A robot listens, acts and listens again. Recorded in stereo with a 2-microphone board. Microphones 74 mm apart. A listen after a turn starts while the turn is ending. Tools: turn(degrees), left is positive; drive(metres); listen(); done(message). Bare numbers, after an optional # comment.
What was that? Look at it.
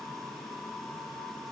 listen()
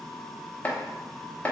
# The chopping: about 20° left or 160° left.
turn(20)
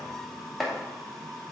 done("Found it: chopping, straight ahead, under 1 m away.")